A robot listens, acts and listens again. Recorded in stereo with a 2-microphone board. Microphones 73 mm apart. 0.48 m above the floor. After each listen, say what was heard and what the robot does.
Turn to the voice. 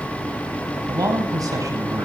The man speaking: about 55° right or 125° right. Turn 55° right.
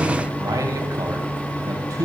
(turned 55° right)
So it is at 60° right. Turn 60° right.
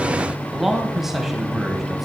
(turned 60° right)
Facing the man speaking, 2 to 4 m away.